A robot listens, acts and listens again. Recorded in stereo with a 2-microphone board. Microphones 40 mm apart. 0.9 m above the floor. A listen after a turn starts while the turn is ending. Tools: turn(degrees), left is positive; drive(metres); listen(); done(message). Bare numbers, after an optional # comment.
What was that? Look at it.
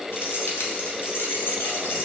# The keys jangling: about 65° left or 115° left.
turn(65)
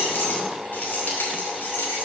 # So it is at 60° left.
turn(60)
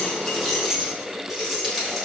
done("Facing the keys jangling, 2 to 4 m away.")